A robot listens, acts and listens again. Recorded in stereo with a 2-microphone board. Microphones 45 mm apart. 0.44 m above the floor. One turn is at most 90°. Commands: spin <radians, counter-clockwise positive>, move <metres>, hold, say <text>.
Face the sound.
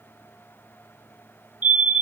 spin -0.61
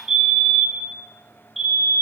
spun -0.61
say Found it: a fire alarm, straight ahead, 2 to 4 m away.